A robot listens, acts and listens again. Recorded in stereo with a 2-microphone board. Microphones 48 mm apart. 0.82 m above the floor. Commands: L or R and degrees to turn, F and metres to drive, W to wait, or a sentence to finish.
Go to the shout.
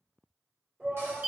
R30
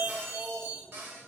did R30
F1.0
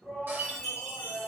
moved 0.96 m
F1.0
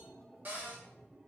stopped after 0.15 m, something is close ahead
Arrived at the shout, straight ahead.